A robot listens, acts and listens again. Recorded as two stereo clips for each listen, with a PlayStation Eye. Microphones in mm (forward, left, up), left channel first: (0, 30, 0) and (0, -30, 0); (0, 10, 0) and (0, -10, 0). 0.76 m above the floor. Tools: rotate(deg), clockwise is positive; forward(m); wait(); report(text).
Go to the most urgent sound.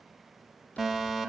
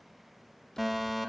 rotate(30)
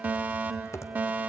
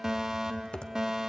rotate(145)
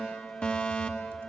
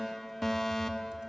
rotate(-20)
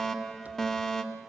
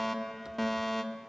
rotate(-10)
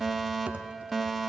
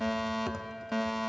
forward(1.0)
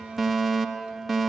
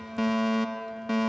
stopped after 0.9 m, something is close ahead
report("Arrived at the fire alarm, straight ahead.")